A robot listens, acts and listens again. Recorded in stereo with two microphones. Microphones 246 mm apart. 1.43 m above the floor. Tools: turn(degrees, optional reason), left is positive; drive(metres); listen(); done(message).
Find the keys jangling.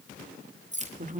turn(degrees=-30, reason="The keys jangling: about 30° right or 150° right.")
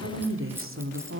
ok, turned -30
listen()
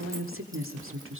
listen()
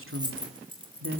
turn(degrees=-20, reason="The keys jangling: about 20° right or 160° right.")
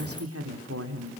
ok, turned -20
listen()
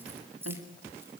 turn(degrees=-10, reason="So it is at 10° right.")
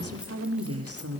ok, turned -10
listen()
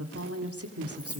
done("Found it: keys jangling, straight ahead.")